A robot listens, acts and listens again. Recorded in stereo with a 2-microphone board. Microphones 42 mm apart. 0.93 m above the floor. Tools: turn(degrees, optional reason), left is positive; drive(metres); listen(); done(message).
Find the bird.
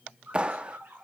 turn(degrees=-55, reason="The bird: about 55° right or 125° right.")
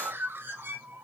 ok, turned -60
turn(degrees=-65, reason="So it is at 65° right.")
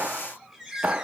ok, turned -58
turn(degrees=-10, reason="The bird is now 10° right.")
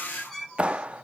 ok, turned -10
done("Facing the bird, 2 to 4 m away.")